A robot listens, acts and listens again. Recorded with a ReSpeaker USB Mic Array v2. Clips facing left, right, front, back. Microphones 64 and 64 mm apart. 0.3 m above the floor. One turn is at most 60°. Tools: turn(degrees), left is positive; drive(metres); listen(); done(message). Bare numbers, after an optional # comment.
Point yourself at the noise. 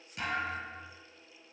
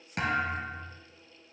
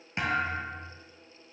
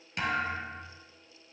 # The thud: 65° right.
turn(-60)
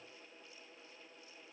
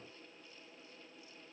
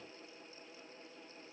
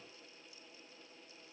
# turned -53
# Nothing new. It was at 10° right.
turn(-10)
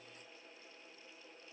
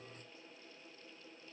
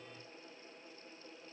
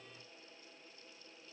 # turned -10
done("I heard a thud from this way, but can't make it out now.")